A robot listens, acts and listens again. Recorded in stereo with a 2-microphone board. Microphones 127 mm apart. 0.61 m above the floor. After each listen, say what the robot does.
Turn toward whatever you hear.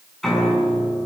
Turn 30° left.
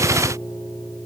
Turn 145° left.
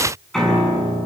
Found it: a piano, straight ahead.